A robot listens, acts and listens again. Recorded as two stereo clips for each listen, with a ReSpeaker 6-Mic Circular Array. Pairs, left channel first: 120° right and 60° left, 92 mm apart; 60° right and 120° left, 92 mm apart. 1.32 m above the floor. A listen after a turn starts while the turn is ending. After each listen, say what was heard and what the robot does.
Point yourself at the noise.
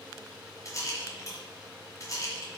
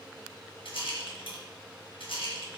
The rattle: 65° right. Turn 65° right.
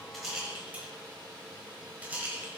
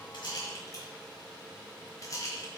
The rattle is now 10° right. Turn 10° right.
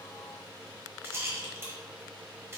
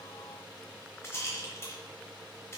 Facing the rattle, 1 to 2 m away.